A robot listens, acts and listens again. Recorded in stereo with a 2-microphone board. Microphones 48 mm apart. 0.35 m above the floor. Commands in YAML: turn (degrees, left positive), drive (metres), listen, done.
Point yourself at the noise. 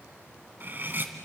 turn: -45
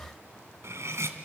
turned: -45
turn: -85
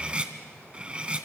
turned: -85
turn: -25
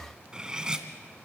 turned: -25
turn: -15
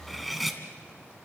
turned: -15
done: "Facing the cutlery clinking, 1 to 2 m away."